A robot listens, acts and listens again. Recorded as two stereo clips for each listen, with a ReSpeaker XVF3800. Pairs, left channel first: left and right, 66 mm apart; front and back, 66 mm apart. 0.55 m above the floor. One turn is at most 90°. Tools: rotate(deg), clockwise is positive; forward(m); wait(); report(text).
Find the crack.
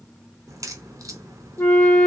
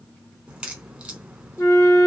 rotate(90)
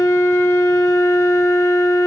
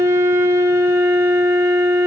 rotate(15)
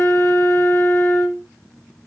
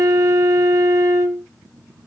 report("Facing where the crack came from. I can't hear it now.")